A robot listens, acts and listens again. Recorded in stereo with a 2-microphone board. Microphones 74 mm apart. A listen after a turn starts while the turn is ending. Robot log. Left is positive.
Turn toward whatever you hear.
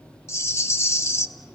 note: The rattle: about 35° left or 145° left.
cmd yaw +35
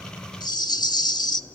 note: So it is at 105° left.
cmd yaw +105
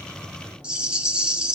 note: The rattle is now 15° right.
cmd yaw -15
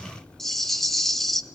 end: Found it: a rattle, straight ahead, 1 to 2 m away.